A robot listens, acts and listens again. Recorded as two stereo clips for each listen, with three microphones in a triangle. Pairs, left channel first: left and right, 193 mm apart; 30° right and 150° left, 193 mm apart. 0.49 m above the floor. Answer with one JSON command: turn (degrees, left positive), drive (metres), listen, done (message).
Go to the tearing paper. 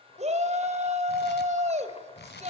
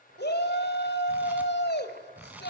{"turn": 70}
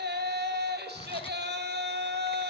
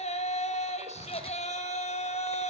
{"listen": true}
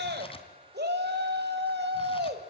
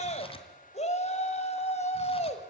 {"turn": 30}
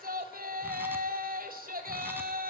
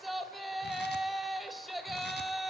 {"listen": true}
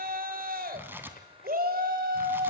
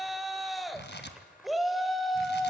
{"turn": -10}
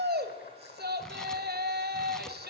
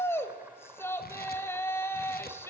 {"listen": true}
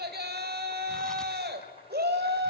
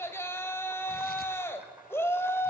{"listen": true}
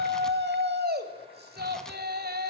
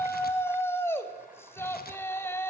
{"done": "I heard tearing paper from this way, but can't make it out now. I did not reach it."}